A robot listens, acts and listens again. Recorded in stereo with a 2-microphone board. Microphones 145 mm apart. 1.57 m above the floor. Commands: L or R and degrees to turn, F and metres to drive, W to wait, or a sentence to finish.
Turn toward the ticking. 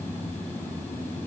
W
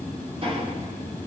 R40
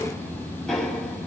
Facing the ticking, over 4 m away.